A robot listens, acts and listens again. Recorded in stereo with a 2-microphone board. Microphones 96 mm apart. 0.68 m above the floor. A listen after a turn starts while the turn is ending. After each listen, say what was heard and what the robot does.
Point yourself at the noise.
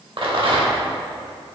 The rattle: about 60° right or 120° right. Turn 60° right.
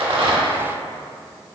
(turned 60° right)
Keep listening.
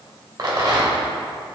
So it is at 50° right. Turn 50° right.
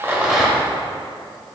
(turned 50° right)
Keep listening.
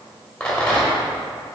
The rattle is now 10° left. Turn 10° left.
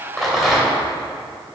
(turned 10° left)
Found it: a rattle, straight ahead.